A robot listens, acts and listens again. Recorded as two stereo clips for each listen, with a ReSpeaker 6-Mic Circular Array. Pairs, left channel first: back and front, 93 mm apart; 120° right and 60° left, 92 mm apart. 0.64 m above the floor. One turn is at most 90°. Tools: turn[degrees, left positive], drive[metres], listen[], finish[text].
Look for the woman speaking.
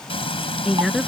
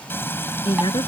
Thought: The woman speaking: 90° right.
Action: turn[-90]
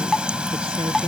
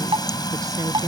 Action: listen[]
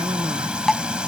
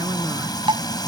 Action: listen[]
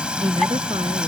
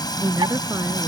Action: finish[Facing the woman speaking.]